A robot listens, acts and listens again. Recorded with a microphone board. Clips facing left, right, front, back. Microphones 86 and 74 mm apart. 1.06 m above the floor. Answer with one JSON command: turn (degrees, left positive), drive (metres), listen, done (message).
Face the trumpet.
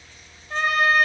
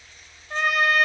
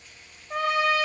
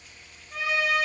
{"done": "Facing the trumpet."}